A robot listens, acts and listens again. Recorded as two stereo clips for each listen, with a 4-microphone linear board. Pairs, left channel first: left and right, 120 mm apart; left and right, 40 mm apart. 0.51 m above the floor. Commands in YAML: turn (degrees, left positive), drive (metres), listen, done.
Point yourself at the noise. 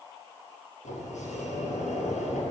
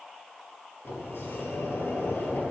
turn: 90
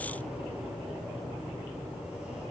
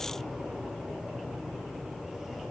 turn: -10
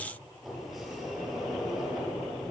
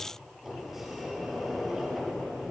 done: "Facing the sliding door, 2 to 4 m away."